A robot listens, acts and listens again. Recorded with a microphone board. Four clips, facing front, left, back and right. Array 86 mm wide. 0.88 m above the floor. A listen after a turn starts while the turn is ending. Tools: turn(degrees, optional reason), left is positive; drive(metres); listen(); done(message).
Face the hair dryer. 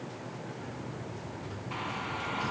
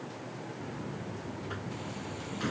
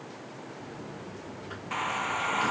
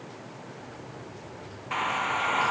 turn(degrees=-110, reason="The hair dryer: 110° right.")
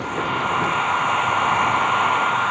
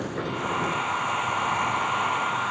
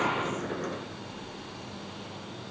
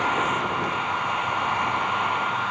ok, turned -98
turn(degrees=-10, reason="The hair dryer is now 10° right.")
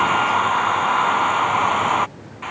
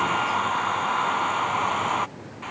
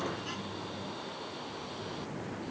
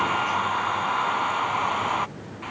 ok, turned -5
done("Found it: a hair dryer, straight ahead.")